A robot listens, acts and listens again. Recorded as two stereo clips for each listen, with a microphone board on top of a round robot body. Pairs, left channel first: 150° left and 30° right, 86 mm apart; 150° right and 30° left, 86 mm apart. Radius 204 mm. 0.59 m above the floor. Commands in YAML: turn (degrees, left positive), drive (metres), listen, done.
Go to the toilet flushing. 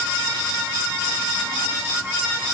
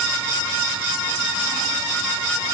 listen: true
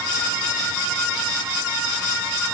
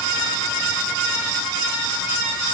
listen: true
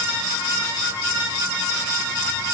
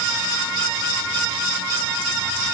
done: "I can't make out a toilet flushing."